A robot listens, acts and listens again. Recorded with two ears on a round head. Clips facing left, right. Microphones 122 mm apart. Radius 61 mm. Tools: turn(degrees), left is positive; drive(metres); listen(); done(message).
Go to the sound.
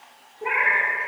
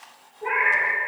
turn(degrees=40)
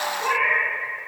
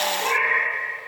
drive(metres=1.0)
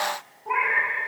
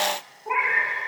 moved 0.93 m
drive(metres=1.0)
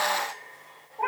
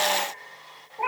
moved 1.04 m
turn(degrees=-10)
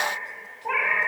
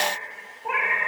drive(metres=1.0)
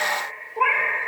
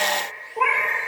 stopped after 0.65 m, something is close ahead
done("I am next to the cat meowing.")